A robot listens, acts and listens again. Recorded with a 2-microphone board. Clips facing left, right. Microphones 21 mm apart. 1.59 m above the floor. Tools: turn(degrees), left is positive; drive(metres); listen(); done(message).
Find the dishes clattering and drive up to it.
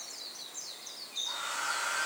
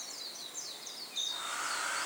listen()
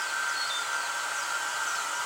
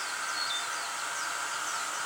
listen()
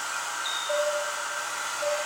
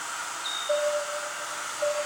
turn(degrees=-20)
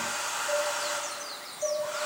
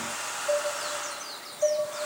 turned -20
turn(degrees=-140)
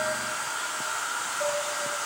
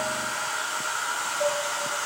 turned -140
turn(degrees=-20)
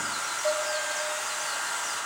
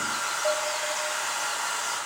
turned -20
drive(metres=1.0)
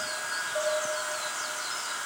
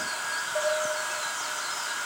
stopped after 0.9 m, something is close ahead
turn(degrees=-10)
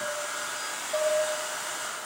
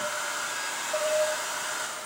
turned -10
done("Arrived at the dishes clattering, straight ahead.")